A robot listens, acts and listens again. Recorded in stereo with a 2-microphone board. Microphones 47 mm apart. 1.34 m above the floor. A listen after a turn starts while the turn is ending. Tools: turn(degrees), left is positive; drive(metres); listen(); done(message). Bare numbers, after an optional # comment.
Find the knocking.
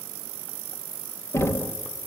# The knocking: about 65° left or 115° left.
turn(65)
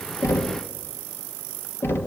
# So it is at 50° left.
turn(50)
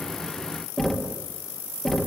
done("Found it: knocking, straight ahead.")